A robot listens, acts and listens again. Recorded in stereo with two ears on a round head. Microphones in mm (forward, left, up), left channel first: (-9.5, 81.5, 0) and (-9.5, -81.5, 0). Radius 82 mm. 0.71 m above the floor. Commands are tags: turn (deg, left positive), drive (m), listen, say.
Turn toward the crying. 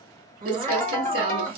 <turn deg="-40"/>
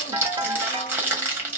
<listen/>
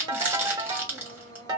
<listen/>
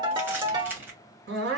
<turn deg="-95"/>
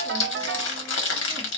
<listen/>
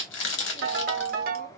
<listen/>
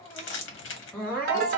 <turn deg="10"/>
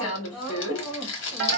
<say>Facing the crying.</say>